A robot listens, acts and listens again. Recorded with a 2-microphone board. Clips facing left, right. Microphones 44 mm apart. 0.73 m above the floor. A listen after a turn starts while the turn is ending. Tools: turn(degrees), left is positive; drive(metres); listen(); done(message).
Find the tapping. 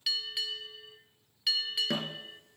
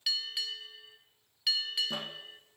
turn(degrees=70)
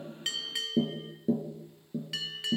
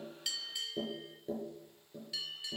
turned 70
done("Facing the tapping.")